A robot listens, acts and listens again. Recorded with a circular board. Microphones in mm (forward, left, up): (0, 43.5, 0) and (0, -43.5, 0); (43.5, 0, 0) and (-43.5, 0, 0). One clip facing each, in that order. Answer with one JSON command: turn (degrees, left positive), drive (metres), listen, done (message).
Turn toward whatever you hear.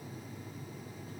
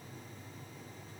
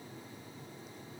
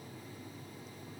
{"listen": true}
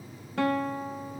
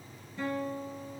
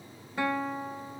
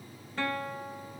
{"turn": 75}
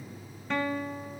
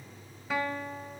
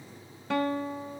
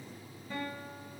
{"done": "Found it: a guitar, straight ahead."}